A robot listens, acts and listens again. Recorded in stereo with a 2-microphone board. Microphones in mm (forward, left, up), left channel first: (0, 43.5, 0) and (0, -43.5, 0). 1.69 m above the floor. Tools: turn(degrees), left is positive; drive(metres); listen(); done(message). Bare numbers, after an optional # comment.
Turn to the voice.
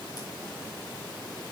listen()
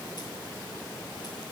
listen()
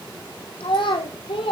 turn(90)
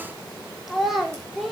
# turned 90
done("Found it: a child speaking, straight ahead, over 4 m away.")